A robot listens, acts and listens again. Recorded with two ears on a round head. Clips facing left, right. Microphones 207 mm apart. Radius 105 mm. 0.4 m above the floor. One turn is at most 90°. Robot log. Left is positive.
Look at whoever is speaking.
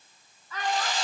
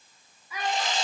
cmd yaw -30
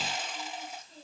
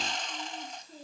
cmd idle
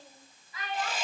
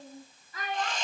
note: So it is at 135° right.
cmd yaw -90
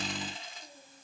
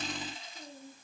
note: Nothing new. It was at 45° right.
cmd yaw -45
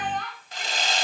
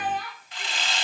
note: The child speaking is now 10° right.
cmd yaw -10
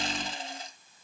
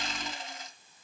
cmd idle
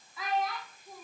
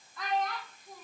end: Found it: a child speaking, straight ahead, 2 to 4 m away.